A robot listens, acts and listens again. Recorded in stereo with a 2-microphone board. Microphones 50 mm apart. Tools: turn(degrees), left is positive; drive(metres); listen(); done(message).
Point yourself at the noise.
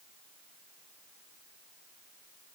listen()
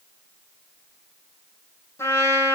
turn(degrees=65)
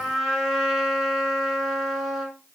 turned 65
done("Found it: a trumpet, straight ahead.")